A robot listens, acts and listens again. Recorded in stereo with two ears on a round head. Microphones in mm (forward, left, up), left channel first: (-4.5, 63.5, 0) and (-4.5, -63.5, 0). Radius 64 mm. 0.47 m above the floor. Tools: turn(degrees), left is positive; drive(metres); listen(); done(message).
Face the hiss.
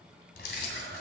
listen()
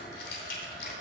listen()
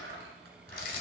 done("I can't make out a hiss to turn to.")